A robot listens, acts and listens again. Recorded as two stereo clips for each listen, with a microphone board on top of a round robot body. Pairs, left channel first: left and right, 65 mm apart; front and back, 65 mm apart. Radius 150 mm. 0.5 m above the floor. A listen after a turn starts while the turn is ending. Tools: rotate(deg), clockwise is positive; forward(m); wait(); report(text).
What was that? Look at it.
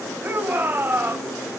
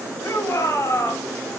rotate(35)
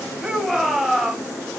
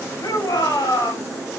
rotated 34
report("Found it: a shout, straight ahead, over 4 m away.")